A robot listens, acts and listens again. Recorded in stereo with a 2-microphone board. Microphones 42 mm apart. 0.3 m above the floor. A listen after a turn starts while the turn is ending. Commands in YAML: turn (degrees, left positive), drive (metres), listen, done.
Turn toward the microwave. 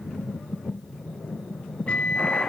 turn: 30
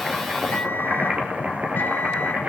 listen: true
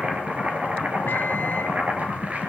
listen: true
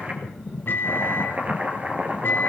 turn: 120
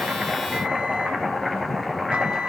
listen: true
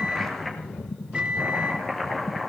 turn: -25
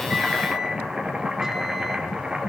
listen: true
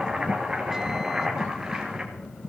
listen: true
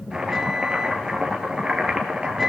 done: "Facing the microwave, 1 to 2 m away."